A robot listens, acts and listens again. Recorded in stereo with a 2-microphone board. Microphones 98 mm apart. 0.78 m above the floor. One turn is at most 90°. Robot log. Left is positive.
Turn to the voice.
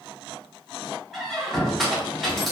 cmd idle
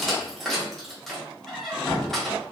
cmd idle
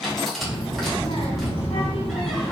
cmd yaw +90
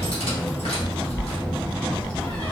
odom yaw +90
note: So it is at 10° left.
cmd yaw +10
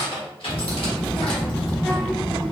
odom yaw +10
end: Facing the child speaking.